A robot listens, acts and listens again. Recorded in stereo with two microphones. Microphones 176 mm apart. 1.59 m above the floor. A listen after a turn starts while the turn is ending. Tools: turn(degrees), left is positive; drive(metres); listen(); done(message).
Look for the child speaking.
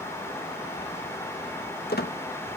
listen()
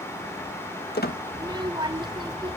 turn(degrees=-30)
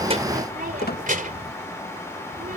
turn(degrees=-120)
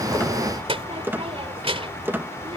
turn(degrees=-35)
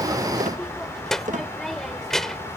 done("Facing the child speaking.")